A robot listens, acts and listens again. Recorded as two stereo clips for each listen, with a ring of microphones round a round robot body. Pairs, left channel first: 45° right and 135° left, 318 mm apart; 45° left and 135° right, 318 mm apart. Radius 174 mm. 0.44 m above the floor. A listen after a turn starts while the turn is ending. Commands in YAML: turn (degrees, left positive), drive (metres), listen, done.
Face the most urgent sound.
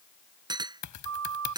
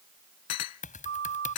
turn: 170
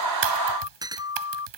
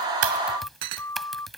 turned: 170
turn: -35
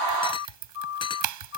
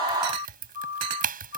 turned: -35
done: "Facing the siren."